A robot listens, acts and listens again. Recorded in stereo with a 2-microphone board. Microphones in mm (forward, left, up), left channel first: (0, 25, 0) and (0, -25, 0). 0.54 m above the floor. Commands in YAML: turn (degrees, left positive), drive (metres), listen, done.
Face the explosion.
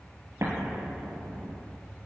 turn: -65
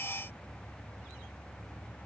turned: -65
listen: true
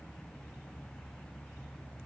done: "I heard an explosion, but can't make it out now. It was about straight ahead or 50° right."